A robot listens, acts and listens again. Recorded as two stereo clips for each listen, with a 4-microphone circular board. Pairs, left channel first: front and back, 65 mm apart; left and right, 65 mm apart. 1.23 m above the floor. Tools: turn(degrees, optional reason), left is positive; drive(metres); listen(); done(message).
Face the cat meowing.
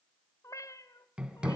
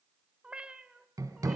turn(degrees=-15, reason="The cat meowing: 15° right.")
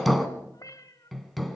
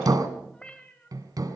turn(degrees=20, reason="The cat meowing is now 20° left.")
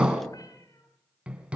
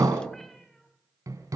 listen()
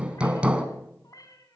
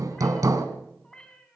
turn(degrees=15, reason="The cat meowing is now 15° left.")
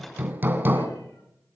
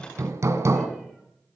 listen()
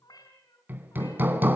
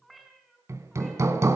done("Facing the cat meowing, over 4 m away.")